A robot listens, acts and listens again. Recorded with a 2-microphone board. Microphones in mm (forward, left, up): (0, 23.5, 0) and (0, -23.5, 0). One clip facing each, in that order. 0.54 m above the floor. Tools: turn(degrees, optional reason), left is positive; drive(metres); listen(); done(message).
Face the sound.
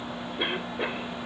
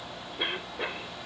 turn(degrees=30)
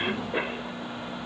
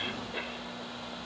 turn(degrees=140, reason="So it is at 140° left.")
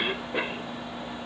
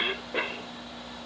done("Facing the cough.")